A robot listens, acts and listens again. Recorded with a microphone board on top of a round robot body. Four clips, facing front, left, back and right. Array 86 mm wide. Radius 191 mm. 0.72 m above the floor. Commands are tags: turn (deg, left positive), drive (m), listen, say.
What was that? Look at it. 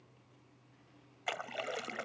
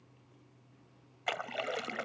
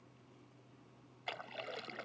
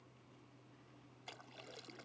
<turn deg="70"/>
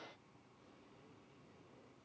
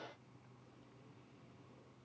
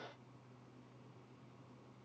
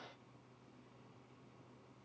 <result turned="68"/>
<say>Facing where the splash came from. I can't hear it now.</say>